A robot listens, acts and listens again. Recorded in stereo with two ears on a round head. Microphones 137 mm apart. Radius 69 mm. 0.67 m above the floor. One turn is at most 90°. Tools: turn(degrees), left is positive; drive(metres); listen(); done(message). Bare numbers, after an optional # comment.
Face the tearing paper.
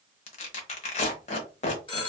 # The tearing paper: about 45° left or 135° left.
turn(45)
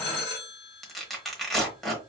done("Found it: tearing paper, straight ahead, 1 to 2 m away.")